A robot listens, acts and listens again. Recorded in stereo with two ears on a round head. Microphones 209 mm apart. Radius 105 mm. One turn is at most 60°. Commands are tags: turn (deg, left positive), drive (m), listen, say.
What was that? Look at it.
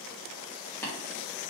<turn deg="30"/>
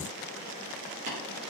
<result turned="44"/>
<turn deg="-35"/>
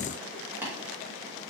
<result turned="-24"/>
<turn deg="-10"/>
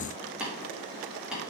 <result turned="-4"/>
<say>Facing the tapping, 1 to 2 m away.</say>